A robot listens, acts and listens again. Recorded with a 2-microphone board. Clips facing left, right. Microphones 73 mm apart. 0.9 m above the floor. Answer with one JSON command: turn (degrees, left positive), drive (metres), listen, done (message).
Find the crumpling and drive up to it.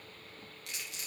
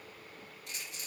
{"turn": 90}
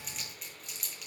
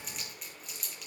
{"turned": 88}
{"drive": 1.0}
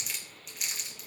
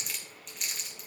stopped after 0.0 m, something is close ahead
{"done": "Blocked. The crumpling is further on, straight ahead."}